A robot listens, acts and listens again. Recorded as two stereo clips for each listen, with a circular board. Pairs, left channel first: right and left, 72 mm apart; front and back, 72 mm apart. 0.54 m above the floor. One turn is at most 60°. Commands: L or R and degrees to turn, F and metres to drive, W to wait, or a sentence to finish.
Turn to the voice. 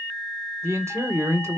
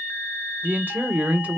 L60
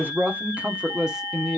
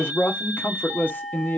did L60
Facing the man speaking.